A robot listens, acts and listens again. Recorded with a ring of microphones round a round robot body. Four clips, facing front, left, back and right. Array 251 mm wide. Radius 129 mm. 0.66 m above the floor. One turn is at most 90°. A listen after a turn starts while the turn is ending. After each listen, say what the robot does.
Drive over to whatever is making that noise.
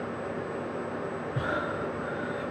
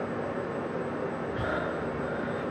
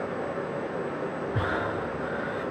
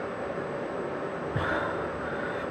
Turn 90° right.
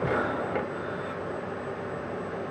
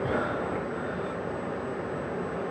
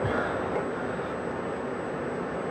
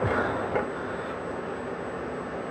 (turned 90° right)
Turn 45° right.
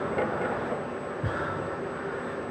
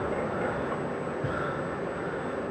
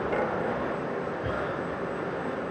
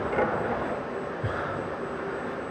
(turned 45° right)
Turn 30° right.
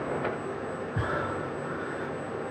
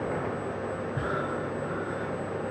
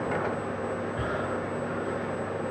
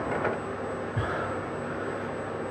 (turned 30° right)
Turn 35° right.
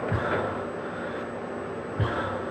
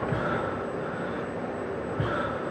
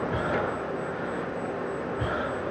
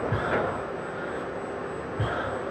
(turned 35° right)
Drive 1.0 m forward.
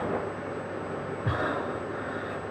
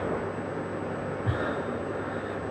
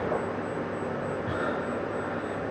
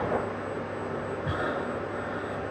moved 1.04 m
Drive 1.0 m forward.
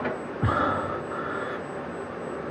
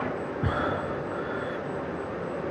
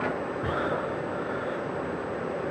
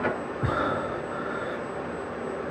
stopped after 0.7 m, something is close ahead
Turn 15° right.
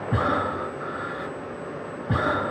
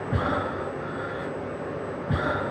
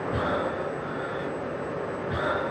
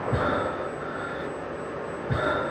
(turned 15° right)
I am next to the breathing.